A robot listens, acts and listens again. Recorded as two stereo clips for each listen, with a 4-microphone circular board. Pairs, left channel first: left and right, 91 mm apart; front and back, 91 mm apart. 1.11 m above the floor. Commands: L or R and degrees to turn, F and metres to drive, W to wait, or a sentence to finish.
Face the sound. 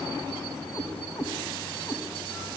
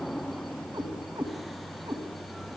L145
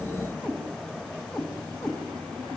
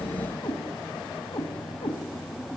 Facing the cat meowing, 2 to 4 m away.